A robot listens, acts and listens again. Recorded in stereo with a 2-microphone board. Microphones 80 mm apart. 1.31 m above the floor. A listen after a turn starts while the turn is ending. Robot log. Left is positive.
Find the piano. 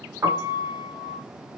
note: The piano: about 40° right or 140° right.
cmd yaw -40
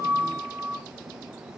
note: So it is at 100° right.
cmd yaw -100
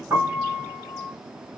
note: The piano is now 10° left.
cmd yaw +10
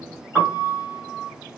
end: Facing the piano.